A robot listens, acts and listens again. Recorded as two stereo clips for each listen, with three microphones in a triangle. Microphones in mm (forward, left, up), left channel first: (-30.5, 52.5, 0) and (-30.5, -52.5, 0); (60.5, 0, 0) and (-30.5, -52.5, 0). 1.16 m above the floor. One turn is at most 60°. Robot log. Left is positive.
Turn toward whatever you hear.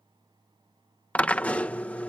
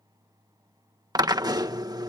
note: The drill: 165° left.
cmd yaw +60
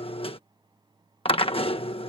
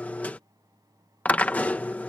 note: The drill is now 105° left.
cmd yaw +60
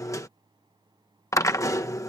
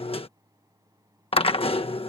note: The drill is now 35° left.
cmd yaw +35
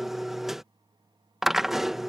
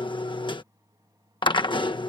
end: Found it: a drill, straight ahead.